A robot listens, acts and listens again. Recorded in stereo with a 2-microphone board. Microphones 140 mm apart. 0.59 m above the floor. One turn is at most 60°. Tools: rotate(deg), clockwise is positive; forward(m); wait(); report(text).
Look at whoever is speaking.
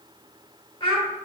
rotate(-35)
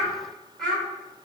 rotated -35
report("Found it: a child speaking, straight ahead, 1 to 2 m away.")